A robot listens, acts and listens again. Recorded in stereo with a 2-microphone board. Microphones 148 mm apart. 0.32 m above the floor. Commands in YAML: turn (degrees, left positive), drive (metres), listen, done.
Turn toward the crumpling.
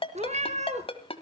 listen: true
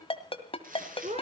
turn: -70
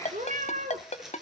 done: "Found it: crumpling, straight ahead."